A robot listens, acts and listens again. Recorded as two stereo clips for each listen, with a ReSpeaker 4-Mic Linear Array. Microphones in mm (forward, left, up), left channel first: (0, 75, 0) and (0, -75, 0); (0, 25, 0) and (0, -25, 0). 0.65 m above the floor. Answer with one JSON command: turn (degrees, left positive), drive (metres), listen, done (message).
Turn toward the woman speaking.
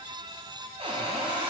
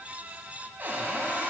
{"listen": true}
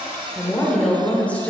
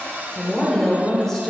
{"turn": 30}
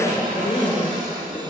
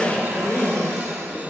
{"turn": 140}
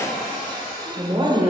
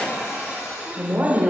{"turn": -40}
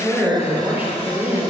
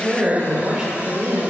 {"turn": -15}
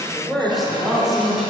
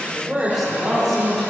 {"done": "Facing the woman speaking."}